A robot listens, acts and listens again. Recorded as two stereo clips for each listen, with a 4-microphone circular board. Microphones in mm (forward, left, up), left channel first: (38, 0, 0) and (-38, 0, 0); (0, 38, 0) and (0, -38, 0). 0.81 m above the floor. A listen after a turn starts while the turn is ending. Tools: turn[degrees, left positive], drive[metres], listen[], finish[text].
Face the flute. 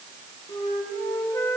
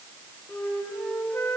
Thought: The flute: 25° left.
Action: turn[25]
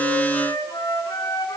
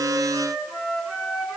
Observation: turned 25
Thought: The flute is now 10° right.
Action: turn[-10]
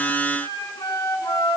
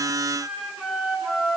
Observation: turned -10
Action: finish[Found it: a flute, straight ahead, over 4 m away.]